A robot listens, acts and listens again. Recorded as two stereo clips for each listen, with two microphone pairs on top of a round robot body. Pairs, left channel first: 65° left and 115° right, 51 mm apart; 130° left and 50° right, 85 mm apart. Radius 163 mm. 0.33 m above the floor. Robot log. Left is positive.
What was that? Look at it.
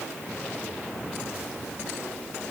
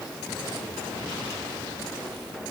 cmd idle
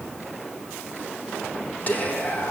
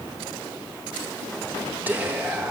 note: The whispering: 20° left.
cmd yaw +20
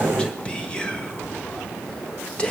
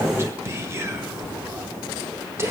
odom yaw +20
end: Facing the whispering.